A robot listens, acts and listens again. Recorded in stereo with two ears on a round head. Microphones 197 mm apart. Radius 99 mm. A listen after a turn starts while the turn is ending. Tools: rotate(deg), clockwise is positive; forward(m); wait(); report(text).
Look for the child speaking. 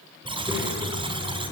rotate(30)
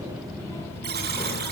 rotate(-10)
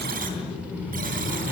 rotate(10)
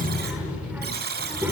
rotate(10)
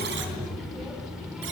report("Facing the child speaking.")